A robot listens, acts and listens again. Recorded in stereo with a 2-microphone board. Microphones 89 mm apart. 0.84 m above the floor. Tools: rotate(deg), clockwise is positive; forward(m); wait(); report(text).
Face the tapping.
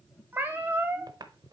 rotate(50)
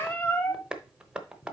rotate(15)
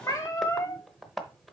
report("Found it: tapping, straight ahead, under 1 m away.")